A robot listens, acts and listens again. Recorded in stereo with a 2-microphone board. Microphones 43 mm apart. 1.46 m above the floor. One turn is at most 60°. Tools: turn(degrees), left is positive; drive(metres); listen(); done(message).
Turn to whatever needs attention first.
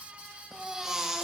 turn(degrees=-30)
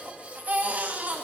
turn(degrees=-60)
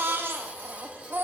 turn(degrees=-60)
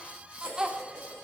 turn(degrees=-25)
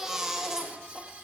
turn(degrees=-15)
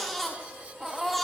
done("Found it: a baby crying, straight ahead, 1 to 2 m away.")